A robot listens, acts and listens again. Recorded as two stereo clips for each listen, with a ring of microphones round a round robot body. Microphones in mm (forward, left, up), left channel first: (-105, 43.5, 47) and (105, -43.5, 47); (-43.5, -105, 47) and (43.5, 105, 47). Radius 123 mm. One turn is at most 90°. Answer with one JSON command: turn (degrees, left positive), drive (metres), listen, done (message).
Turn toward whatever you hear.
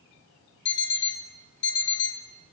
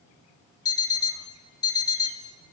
{"turn": 90}
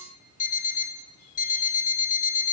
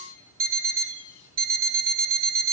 {"turn": 90}
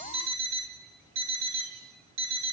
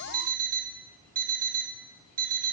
{"turn": 15}
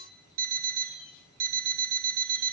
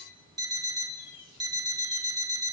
{"done": "Found it: an alarm clock, straight ahead, 2 to 4 m away."}